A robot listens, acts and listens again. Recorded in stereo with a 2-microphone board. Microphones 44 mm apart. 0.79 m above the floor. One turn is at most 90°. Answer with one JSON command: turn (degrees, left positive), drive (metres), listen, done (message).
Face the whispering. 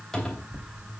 {"listen": true}
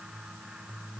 {"listen": true}
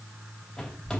{"done": "I can't make out whispering, only a cupboard door."}